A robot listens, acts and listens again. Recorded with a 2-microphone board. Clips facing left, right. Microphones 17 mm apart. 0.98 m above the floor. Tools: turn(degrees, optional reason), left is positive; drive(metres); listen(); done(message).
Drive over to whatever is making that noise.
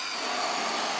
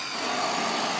turn(degrees=-30)
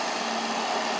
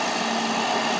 turn(degrees=-135, reason="So it is at 135° right.")
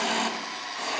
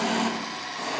turn(degrees=20, reason="The hiss is now 20° left.")
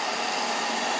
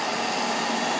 drive(metres=1.0)
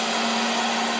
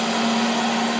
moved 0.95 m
drive(metres=1.0)
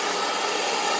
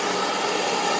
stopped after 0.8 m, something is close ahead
done("I am next to the hiss.")